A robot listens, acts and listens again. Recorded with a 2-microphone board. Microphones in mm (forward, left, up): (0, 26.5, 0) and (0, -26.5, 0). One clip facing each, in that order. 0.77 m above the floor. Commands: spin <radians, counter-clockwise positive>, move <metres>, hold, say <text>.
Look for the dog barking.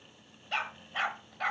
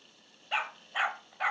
spin -0.52
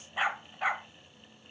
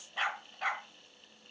spin 0.26
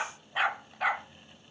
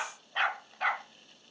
say Found it: a dog barking, straight ahead.